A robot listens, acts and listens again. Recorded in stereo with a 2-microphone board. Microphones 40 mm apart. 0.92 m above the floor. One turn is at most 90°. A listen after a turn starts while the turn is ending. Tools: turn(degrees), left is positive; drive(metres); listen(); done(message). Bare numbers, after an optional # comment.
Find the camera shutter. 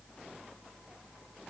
listen()
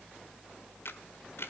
# The camera shutter: about 70° left or 110° left.
turn(70)
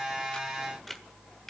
done("Facing the camera shutter, 1 to 2 m away.")